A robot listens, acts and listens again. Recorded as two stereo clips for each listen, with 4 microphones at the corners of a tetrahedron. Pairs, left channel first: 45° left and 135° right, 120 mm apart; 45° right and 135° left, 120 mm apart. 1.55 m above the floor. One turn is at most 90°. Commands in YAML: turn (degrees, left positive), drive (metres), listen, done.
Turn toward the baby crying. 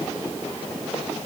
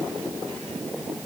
listen: true
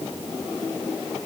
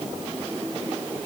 listen: true
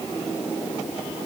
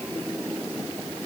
done: "I can't make out a baby crying to turn to."